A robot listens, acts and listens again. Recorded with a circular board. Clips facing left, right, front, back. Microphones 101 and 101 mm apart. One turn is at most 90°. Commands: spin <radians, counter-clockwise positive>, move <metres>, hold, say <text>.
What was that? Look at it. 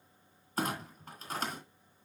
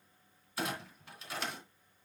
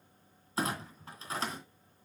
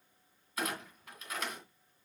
spin 0.87
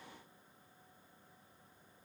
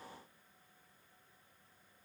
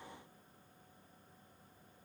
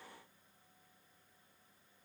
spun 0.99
say I heard a clunk from this way, but can't make it out now.